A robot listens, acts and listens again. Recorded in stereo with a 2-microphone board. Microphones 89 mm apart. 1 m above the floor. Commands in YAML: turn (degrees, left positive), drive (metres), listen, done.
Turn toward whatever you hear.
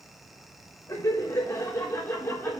turn: 20
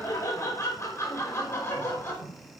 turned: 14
turn: 25
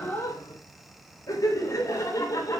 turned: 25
turn: 35
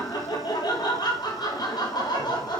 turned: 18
turn: 125
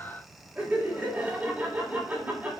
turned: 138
turn: -15
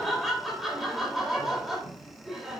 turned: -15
done: "Found it: laughter, straight ahead."